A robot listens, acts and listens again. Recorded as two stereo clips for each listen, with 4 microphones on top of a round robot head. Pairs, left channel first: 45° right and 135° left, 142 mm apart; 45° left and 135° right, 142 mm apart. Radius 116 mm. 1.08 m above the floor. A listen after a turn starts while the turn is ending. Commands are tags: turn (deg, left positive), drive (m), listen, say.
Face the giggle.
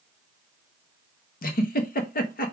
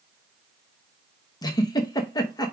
<turn deg="-20"/>
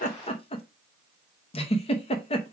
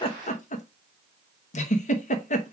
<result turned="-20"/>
<say>Found it: a giggle, straight ahead.</say>